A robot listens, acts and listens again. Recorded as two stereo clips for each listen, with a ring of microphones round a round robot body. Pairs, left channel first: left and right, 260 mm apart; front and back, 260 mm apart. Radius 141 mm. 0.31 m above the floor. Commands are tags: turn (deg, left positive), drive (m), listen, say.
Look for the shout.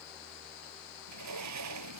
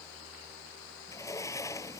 <listen/>
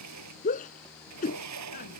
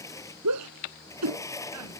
<turn deg="150"/>
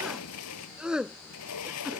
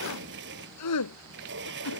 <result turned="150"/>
<say>Found it: a shout, straight ahead.</say>